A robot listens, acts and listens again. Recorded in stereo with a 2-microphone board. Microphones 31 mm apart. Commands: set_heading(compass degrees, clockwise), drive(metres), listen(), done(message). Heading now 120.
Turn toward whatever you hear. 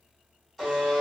set_heading(90)
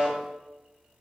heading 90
set_heading(120)
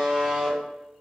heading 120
done("Facing the buzzer.")